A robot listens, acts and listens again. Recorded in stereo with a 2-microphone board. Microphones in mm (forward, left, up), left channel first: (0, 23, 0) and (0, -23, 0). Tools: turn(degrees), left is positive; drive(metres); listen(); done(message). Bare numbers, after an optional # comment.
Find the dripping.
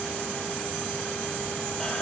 listen()
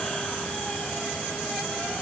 listen()
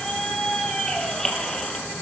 done("I can't make out dripping, only a squeak.")